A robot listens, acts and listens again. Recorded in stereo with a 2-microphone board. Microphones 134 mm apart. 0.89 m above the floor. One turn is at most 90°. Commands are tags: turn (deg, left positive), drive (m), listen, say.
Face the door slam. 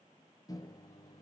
<listen/>
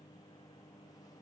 <listen/>
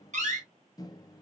<turn deg="-65"/>
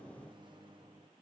<listen/>
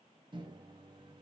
<say>I heard a door slam, but can't make it out now. It was about straight ahead or 50° right.</say>